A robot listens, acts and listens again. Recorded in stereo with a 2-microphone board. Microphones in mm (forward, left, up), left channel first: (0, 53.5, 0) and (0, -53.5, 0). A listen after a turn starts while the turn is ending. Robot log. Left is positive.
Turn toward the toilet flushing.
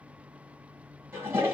note: The toilet flushing: about 25° right or 155° right.
cmd yaw -25
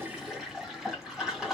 end: Facing the toilet flushing, 1 to 2 m away.